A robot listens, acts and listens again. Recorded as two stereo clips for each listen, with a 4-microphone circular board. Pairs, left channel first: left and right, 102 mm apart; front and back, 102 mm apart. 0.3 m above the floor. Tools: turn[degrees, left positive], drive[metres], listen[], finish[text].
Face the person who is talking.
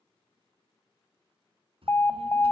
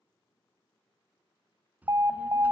Thought: The child speaking: 105° right.
Action: turn[-105]
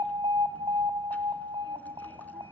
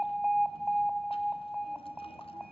Action: listen[]
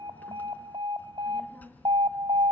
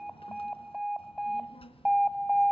Thought: The child speaking is now 15° left.
Action: turn[15]
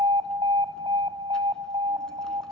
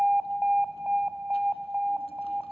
Action: listen[]
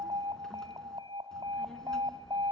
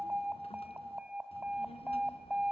Action: finish[Found it: a child speaking, straight ahead.]